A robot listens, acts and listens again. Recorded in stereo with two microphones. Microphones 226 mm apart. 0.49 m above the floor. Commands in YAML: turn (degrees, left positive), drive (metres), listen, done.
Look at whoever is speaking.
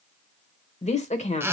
turn: 30
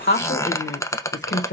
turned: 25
turn: 120
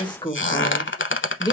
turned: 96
turn: 20
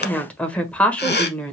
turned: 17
done: "Found it: a woman speaking, straight ahead, 1 to 2 m away."